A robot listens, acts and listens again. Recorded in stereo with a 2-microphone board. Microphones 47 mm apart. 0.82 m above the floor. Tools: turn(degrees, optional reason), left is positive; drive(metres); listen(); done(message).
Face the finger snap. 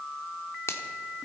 turn(degrees=90)
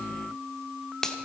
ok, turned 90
turn(degrees=10, reason="So it is at 10° left.")
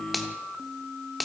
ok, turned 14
done("Found it: a finger snap, straight ahead.")